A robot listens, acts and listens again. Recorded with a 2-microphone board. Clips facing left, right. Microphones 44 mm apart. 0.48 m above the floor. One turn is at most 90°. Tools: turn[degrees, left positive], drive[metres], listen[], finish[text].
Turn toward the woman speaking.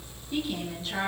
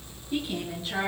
Action: turn[-30]
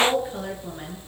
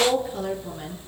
Thought: So it is at 20° left.
Action: turn[20]
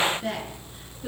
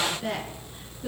Action: finish[Facing the woman speaking.]